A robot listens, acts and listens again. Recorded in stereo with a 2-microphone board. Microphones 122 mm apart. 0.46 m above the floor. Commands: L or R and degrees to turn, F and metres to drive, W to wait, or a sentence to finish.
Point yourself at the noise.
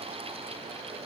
W
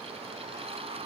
W
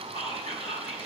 L55
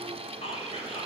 L65
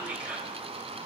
R15
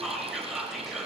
Found it: whispering, straight ahead, 1 to 2 m away.